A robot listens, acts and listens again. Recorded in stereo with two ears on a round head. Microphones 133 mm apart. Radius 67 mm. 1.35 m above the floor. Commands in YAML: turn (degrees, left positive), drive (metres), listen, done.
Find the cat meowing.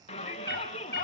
turn: 90
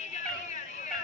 done: "Found it: a cat meowing, straight ahead, over 4 m away."